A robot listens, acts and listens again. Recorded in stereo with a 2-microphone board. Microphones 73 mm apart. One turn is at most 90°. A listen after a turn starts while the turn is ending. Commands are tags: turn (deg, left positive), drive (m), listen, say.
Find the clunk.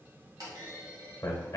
<turn deg="-65"/>
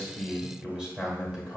<listen/>
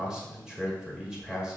<say>I heard a clunk, but can't make it out now. It was about straight ahead or 50° right.</say>